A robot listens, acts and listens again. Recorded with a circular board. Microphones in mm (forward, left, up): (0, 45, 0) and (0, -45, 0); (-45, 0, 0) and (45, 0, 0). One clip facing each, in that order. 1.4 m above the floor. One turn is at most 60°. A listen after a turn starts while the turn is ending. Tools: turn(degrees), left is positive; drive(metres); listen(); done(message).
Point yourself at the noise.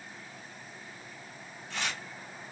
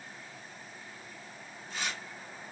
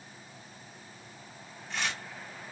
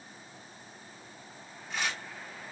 turn(degrees=60)
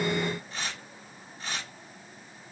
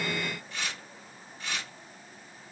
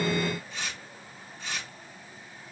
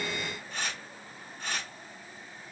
turn(degrees=35)
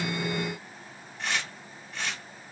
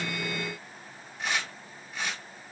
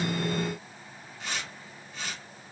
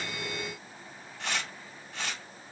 turn(degrees=-10)
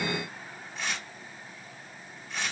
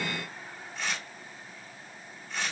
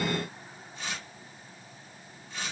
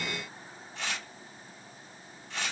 done("Found it: tearing paper, straight ahead, 2 to 4 m away.")